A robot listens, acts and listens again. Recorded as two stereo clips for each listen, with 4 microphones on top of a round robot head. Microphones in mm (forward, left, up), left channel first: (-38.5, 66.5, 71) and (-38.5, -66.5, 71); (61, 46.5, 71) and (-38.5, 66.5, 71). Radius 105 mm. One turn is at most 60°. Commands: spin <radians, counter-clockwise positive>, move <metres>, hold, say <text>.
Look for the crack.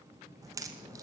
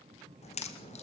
spin -0.35
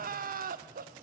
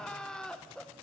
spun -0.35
say I heard a crack from this way, but can't make it out now.